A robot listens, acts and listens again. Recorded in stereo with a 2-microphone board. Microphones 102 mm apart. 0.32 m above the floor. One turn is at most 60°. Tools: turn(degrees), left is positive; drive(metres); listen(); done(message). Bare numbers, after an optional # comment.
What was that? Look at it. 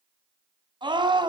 # The scream: about 50° right or 130° right.
turn(-50)
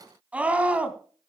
# So it is at 15° right.
turn(-15)
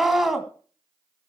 done("Facing the scream.")